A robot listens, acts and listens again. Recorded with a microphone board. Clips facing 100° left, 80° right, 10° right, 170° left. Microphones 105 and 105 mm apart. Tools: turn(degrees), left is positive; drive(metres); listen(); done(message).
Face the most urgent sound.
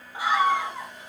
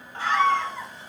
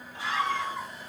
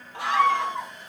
turn(degrees=180)
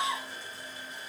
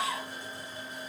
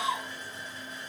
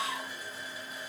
done("Facing the scream, 1 to 2 m away.")